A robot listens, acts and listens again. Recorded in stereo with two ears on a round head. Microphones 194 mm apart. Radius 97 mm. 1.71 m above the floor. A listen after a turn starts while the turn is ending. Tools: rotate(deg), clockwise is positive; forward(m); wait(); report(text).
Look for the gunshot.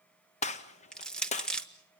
rotate(-30)
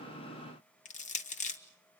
wait()
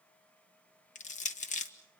report("I heard a gunshot, but can't make it out now. It was about straight ahead or 120° left.")